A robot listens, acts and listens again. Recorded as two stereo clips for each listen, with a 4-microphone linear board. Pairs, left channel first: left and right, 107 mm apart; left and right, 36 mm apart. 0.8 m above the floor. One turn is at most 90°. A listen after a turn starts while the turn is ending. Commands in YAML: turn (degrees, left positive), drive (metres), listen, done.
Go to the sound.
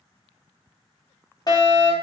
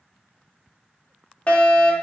turn: 40
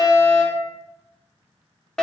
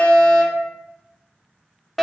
turn: 10
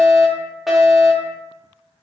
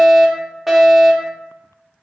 drive: 1.0
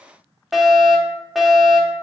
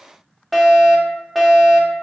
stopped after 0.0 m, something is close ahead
done: "Something is in my way. I am facing the fire alarm but have not reached it."